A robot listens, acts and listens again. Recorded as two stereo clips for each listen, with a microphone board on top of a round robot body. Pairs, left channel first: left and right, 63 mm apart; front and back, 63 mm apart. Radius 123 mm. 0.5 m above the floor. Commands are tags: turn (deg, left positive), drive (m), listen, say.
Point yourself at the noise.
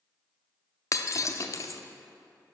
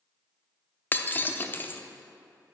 <turn deg="60"/>
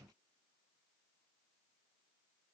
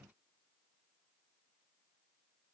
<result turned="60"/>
<say>I heard breaking glass from this way, but can't make it out now.</say>